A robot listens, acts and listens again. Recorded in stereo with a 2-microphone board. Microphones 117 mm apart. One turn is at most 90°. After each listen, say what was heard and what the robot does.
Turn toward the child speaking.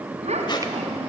The child speaking: about 70° right or 110° right. Turn 70° right.
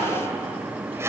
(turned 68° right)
Keep listening.
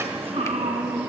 So it is at 65° right. Turn 65° right.
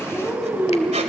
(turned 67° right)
The child speaking is now 10° right. Turn 10° right.
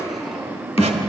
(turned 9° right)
Facing the child speaking.